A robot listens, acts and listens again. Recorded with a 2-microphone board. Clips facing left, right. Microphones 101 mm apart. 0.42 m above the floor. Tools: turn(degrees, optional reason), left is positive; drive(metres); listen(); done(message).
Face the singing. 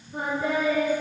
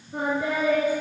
turn(degrees=-90)
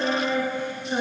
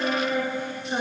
turn(degrees=-15, reason="So it is at 15° right.")
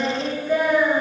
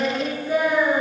turn(degrees=-15, reason="The singing is now 15° right.")
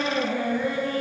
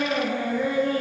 turn(degrees=-20, reason="The singing is now 20° right.")
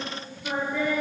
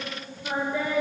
turn(degrees=-10, reason="The singing is now 10° right.")
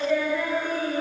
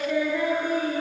done("Facing the singing.")